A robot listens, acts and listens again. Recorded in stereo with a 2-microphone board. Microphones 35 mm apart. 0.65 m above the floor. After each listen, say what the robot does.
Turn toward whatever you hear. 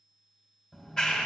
Turn 25° left.
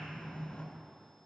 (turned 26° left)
Turn 130° left.
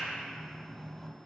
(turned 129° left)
Facing the clap, 2 to 4 m away.